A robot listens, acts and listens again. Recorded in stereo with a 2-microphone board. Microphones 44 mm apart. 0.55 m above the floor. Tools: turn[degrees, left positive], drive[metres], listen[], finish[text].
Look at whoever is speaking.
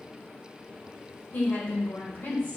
Thought: The woman speaking: about 60° left or 120° left.
Action: turn[60]
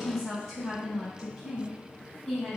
Action: finish[Facing the woman speaking, 2 to 4 m away.]